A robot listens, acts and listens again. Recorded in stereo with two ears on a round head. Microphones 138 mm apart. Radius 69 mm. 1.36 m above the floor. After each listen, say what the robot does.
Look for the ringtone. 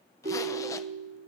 Turn 55° right.
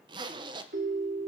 Turn 70° right.
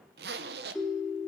Found it: a ringtone, straight ahead, 2 to 4 m away.